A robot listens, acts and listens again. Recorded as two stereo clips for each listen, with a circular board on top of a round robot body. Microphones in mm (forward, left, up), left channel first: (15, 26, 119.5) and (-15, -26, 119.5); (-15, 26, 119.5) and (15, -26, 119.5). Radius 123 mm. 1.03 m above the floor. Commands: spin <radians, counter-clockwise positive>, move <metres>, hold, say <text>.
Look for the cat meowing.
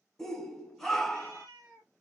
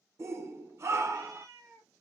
spin -1.66
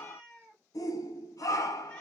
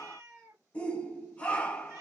spin -0.26
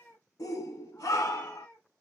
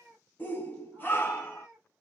say Found it: a cat meowing, straight ahead.